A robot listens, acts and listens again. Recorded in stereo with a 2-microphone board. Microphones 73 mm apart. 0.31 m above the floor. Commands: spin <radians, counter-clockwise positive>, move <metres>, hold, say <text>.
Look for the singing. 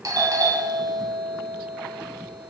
hold
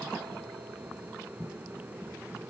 hold
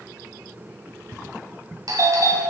say I can't make out singing to turn to.